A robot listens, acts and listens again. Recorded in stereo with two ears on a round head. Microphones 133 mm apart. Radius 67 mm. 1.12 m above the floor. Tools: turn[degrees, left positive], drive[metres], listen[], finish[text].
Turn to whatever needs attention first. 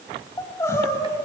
Thought: The crying: about 20° left or 160° left.
Action: turn[20]
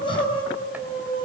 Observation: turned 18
Thought: So it is at 145° left.
Action: turn[145]
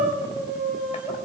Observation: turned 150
Thought: The crying is now 10° right.
Action: turn[-10]
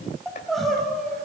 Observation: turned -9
Action: finish[Facing the crying.]